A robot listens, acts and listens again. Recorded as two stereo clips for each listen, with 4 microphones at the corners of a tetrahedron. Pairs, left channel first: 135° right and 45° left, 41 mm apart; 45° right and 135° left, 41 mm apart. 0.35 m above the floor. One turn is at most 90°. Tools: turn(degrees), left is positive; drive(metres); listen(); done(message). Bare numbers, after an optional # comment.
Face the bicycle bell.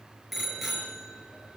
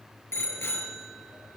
# The bicycle bell: 45° right.
turn(-45)
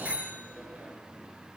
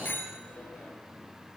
# The bicycle bell is now 10° right.
turn(-10)
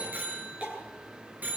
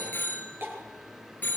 done("Facing the bicycle bell.")